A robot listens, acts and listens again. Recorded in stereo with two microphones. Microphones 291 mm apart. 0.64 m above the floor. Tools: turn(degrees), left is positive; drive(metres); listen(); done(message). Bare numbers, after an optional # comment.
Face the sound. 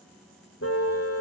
# The car horn: about 50° left or 130° left.
turn(50)
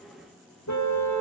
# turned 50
# So it is at 80° left.
turn(80)
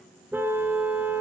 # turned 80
done("Facing the car horn.")